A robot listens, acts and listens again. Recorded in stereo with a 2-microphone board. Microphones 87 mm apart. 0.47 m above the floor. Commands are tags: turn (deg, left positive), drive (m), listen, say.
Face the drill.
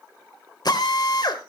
<turn deg="60"/>
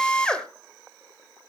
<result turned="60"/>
<turn deg="10"/>
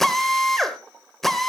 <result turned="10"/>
<say>Facing the drill, 1 to 2 m away.</say>